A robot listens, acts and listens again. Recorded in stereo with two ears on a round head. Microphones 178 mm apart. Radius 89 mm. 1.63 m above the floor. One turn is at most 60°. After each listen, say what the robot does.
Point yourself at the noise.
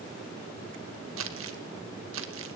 Turn 60° right.
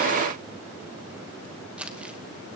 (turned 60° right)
Found it: crumpling, straight ahead, 2 to 4 m away.